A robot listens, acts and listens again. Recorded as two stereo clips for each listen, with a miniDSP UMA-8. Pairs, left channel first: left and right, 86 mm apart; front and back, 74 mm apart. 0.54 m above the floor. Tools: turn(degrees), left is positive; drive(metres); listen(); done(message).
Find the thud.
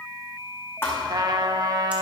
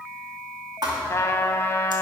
turn(degrees=150)
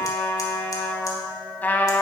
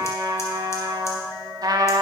done("I heard a thud from this way, but can't make it out now.")